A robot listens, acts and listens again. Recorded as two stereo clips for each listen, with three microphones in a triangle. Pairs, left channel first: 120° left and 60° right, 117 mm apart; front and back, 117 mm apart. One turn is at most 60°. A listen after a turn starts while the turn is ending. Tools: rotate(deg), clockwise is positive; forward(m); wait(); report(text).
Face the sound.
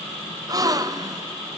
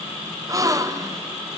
rotate(60)
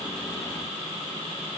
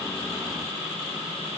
rotate(60)
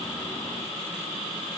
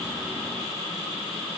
report("I heard a gasp from this way, but can't make it out now.")